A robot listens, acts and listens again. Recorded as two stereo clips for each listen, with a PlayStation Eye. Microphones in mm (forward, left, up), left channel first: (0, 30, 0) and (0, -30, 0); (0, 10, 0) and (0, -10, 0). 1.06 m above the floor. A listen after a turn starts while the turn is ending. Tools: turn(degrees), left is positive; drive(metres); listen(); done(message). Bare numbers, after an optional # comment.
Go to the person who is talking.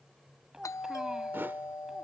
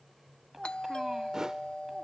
turn(-30)
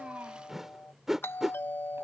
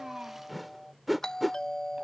listen()
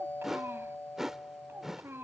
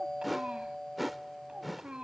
# So it is at 140° right.
turn(-140)
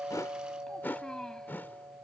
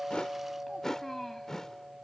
# The child speaking is now 10° left.
turn(10)
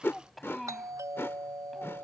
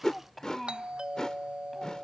drive(1.0)
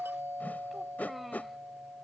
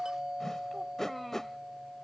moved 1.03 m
listen()
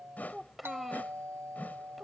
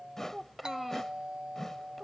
drive(1.0)
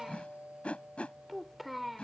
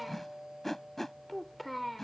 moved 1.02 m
drive(1.0)
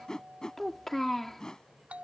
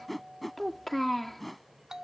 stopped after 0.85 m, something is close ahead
done("Arrived at the child speaking, straight ahead.")